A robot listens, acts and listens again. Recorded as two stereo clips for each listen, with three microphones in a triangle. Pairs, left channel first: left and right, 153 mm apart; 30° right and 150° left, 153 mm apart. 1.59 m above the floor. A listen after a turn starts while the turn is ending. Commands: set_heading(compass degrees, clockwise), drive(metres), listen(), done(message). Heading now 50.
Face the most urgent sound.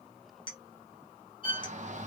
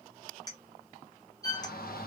set_heading(100)
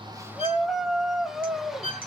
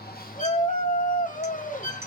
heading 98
done("Facing the shout.")